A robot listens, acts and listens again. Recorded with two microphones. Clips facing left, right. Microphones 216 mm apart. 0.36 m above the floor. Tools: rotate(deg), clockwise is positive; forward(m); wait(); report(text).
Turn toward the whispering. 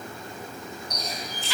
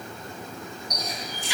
wait()
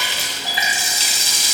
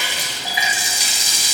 wait()
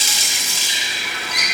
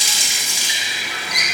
report("I can't make out whispering, only a running tap.")